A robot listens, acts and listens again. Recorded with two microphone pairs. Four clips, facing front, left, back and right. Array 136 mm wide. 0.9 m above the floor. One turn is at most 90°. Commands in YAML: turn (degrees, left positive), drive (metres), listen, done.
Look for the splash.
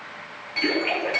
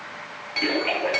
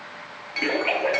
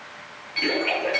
turn: 90
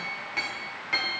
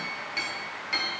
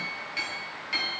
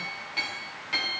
turn: 60
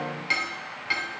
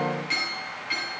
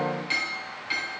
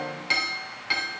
done: "I heard a splash from this way, but can't make it out now."